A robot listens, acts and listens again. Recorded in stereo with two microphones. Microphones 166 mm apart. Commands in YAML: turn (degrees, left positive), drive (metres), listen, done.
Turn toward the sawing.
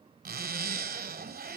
listen: true
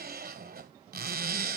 listen: true
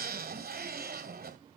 done: "I can't make out sawing to turn to."